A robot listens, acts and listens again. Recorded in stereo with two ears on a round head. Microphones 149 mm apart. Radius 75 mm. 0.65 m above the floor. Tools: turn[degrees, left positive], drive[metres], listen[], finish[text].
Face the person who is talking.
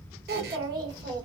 Thought: The child speaking: about 25° right or 155° right.
Action: turn[-25]
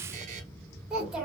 Action: finish[Facing the child speaking.]